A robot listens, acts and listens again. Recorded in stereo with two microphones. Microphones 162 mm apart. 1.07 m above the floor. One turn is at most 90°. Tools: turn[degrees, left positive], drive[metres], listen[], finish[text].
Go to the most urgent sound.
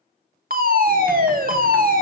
Thought: The fire alarm: about 60° right or 120° right.
Action: turn[-60]
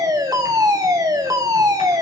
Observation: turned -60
Thought: So it is at 25° right.
Action: turn[-25]
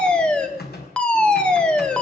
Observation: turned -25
Action: drive[1.0]
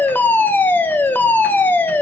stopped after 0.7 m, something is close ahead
Thought: The fire alarm is now 15° left.
Action: turn[15]
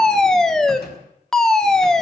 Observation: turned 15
Action: finish[Arrived at the fire alarm, straight ahead.]